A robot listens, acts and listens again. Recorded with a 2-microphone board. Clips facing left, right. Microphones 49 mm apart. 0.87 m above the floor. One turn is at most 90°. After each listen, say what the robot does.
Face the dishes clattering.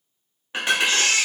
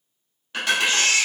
Turn 25° left.
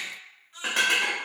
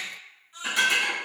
Turn 90° left.
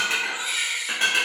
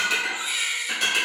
Turn 30° left.
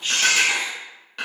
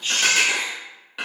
Facing the dishes clattering, under 1 m away.